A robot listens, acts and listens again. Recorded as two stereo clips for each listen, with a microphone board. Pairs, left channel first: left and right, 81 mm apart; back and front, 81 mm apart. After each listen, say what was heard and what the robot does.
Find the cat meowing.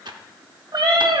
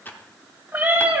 The cat meowing: 65° right. Turn 65° right.
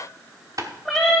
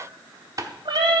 Facing the cat meowing, 2 to 4 m away.